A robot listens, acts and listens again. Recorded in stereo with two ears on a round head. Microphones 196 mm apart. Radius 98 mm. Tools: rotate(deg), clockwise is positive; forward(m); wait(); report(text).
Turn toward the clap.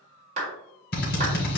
rotate(35)
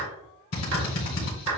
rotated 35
rotate(105)
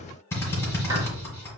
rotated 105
wait()
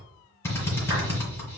wait()
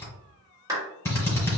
rotate(15)
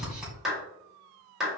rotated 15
report("Facing the clap.")